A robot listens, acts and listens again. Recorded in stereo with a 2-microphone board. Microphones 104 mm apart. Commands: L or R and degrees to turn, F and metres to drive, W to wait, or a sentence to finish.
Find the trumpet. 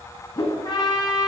L45
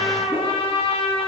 L85
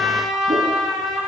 Facing the trumpet, 1 to 2 m away.